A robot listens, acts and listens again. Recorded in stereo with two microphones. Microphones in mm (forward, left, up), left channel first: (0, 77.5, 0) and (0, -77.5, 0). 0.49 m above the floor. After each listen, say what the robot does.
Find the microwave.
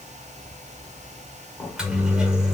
Turn 30° right.
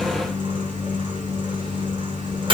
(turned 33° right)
Turn 140° right.
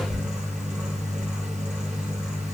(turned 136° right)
Found it: a microwave, straight ahead.